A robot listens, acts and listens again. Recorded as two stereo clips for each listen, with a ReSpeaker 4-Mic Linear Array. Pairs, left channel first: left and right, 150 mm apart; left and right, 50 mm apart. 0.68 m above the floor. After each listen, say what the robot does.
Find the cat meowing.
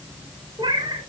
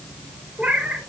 Turn 30° right.
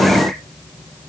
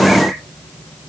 Keep listening.
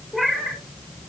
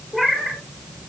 Found it: a cat meowing, straight ahead, 2 to 4 m away.